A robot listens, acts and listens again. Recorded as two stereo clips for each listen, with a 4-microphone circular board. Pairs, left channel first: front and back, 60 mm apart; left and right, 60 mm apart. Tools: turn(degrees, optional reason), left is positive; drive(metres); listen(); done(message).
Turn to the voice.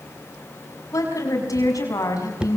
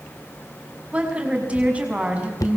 turn(degrees=-25, reason="The woman speaking: 25° right.")
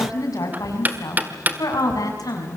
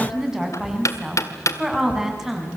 turn(degrees=-10, reason="The woman speaking is now 10° right.")
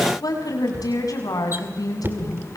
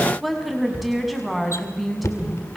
done("Facing the woman speaking.")